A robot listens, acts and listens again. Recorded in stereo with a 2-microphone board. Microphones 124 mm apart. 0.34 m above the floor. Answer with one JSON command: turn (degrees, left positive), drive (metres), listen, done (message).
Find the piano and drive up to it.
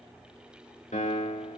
{"turn": 70}
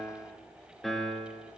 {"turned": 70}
{"drive": 1.0}
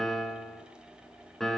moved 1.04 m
{"drive": 1.0}
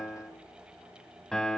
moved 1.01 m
{"drive": 1.0}
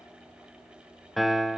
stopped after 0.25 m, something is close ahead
{"done": "Arrived at the piano, straight ahead."}